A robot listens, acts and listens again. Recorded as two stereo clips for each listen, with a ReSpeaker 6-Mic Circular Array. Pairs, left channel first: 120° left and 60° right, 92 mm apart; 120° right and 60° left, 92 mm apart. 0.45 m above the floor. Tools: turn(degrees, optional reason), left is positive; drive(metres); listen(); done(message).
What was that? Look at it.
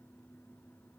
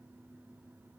listen()
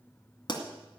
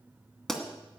turn(degrees=155, reason="The pop: 155° left.")
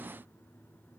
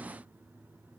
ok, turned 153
done("I heard a pop from this way, but can't make it out now.")